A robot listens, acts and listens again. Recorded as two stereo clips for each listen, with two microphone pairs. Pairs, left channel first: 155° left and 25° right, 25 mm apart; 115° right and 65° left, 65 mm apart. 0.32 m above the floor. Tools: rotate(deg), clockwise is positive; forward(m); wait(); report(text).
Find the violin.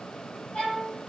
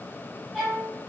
rotate(-150)
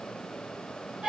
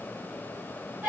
report("Facing the violin.")